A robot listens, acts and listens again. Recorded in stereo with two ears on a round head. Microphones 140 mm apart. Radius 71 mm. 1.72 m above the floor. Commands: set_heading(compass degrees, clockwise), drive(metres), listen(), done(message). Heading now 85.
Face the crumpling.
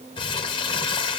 set_heading(50)
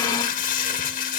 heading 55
set_heading(300)
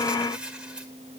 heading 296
done("Facing the crumpling, 2 to 4 m away.")